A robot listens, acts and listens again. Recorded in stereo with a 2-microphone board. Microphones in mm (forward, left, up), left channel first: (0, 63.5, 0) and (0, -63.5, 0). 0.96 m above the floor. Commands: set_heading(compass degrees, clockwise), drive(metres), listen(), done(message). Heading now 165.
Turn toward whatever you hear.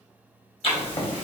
set_heading(115)
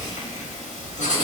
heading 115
set_heading(35)
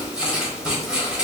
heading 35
done("Facing the writing.")